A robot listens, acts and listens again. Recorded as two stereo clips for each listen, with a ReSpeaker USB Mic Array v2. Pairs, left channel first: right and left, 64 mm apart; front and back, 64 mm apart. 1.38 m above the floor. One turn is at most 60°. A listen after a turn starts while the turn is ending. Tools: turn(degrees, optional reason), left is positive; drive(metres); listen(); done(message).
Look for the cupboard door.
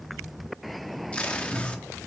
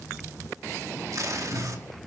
turn(degrees=35, reason="The cupboard door: 35° left.")
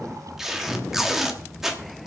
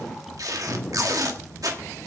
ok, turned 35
done("Found it: a cupboard door, straight ahead.")